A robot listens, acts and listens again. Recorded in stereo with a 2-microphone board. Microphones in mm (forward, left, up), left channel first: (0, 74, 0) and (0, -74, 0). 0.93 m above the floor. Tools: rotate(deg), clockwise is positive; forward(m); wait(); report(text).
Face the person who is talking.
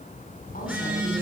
wait()
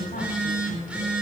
rotate(-90)
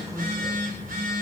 wait()
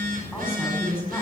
rotate(-15)
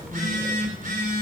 wait()
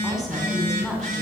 report("Facing the woman speaking, over 4 m away.")